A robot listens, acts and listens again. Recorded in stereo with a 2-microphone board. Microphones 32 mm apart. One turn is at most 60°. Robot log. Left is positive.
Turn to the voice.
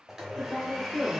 note: The woman speaking: about 20° left or 160° left.
cmd yaw +20
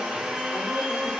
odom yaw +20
cmd idle
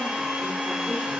cmd idle
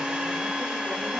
end: I heard a woman speaking, but can't make it out now. It was about straight ahead or 140° left.